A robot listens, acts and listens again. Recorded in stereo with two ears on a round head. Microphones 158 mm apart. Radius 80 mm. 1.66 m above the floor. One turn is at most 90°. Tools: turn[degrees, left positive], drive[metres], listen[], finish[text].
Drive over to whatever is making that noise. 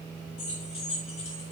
Thought: The keys jangling: about 35° left or 145° left.
Action: turn[35]
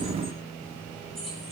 Action: drive[1.0]
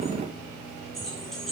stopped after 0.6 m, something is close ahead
Action: finish[Something is in my way. I am facing the keys jangling but have not reached it.]